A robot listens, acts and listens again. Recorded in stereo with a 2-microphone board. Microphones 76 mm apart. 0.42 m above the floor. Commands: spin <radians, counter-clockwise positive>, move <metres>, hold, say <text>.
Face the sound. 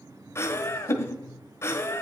spin 0.61
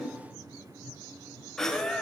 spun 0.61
say Facing the laughter.